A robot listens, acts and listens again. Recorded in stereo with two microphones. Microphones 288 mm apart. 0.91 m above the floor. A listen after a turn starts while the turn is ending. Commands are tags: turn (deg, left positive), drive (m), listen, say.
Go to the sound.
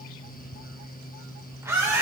<turn deg="-30"/>
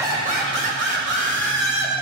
<turn deg="-140"/>
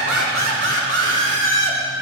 <turn deg="-55"/>
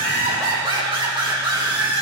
<turn deg="-15"/>
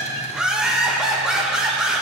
<drive m="1.0"/>
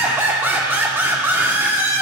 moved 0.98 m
<turn deg="-10"/>
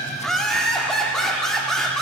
<drive m="1.0"/>
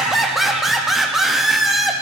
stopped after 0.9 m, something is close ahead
<say>Arrived at the laughter, straight ahead.</say>